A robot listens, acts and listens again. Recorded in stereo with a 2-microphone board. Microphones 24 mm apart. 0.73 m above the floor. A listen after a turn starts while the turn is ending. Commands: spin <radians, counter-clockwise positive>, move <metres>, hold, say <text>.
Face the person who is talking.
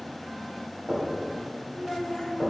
spin 0.52
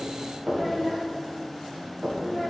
spin -0.44
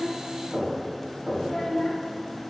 spin 0.17
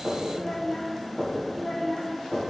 say Found it: a child speaking, straight ahead, 1 to 2 m away.